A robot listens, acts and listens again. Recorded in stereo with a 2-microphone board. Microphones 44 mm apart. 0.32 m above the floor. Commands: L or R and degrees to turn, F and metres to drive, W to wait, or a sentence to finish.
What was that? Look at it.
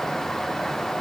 W
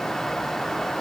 W
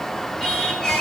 L15
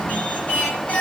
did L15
L150
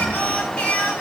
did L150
L30
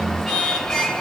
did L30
L15
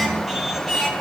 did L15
Found it: singing, straight ahead.